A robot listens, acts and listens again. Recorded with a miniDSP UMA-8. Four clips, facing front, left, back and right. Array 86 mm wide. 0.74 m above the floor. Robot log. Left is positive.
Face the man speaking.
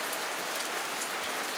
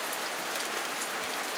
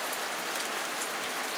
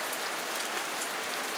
cmd idle
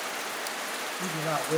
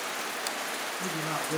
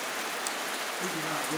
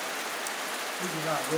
note: The man speaking: 40° right.
cmd yaw -40
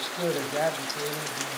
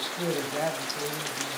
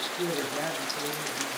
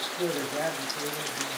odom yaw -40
end: Found it: a man speaking, straight ahead.